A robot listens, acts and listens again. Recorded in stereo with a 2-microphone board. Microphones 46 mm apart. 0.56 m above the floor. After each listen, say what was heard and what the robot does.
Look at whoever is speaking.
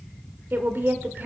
The woman speaking: about 50° right or 130° right. Turn 50° right.
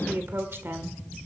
So it is at 70° right. Turn 70° right.
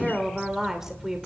The woman speaking is now 10° right. Turn 10° right.
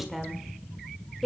Found it: a woman speaking, straight ahead, 1 to 2 m away.